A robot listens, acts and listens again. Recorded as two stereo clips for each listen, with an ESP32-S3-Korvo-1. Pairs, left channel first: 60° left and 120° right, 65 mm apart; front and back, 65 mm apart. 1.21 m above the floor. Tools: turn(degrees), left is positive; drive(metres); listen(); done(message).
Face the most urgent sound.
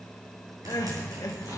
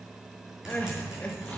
turn(degrees=65)
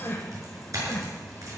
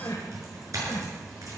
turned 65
turn(degrees=15)
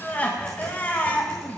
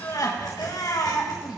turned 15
done("Facing the crying.")